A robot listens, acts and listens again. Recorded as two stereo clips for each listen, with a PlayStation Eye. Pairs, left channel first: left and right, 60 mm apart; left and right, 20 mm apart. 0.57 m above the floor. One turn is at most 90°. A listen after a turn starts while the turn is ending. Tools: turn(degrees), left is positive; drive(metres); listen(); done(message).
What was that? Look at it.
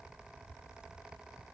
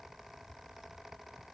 listen()
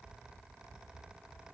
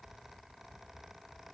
listen()
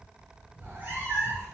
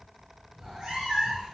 turn(degrees=-40)
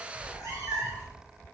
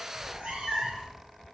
turn(degrees=-90)
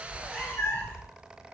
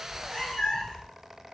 turn(degrees=35)
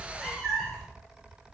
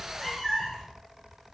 done("Facing the cat meowing, 2 to 4 m away.")